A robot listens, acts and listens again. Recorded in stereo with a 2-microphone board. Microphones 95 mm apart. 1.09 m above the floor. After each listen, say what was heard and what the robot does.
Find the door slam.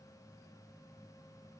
Keep listening.
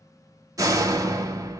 The door slam: about 35° right or 145° right. Turn 35° right.
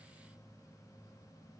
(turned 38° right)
Keep listening.
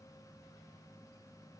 I heard a door slam, but can't make it out now. It was about straight ahead or 105° right.